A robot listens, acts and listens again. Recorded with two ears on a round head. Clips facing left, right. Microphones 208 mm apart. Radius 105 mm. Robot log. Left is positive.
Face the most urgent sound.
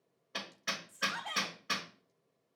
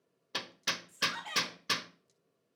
note: The shout: about 45° right or 135° right.
cmd yaw -45
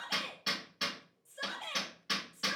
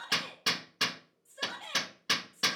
end: Facing the shout, 2 to 4 m away.